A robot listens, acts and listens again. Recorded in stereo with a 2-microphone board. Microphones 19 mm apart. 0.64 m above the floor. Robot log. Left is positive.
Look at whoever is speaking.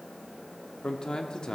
note: The man speaking: about 45° left or 135° left.
cmd yaw +45
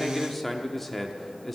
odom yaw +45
note: So it is at 15° left.
cmd yaw +15
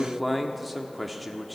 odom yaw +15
end: Facing the man speaking.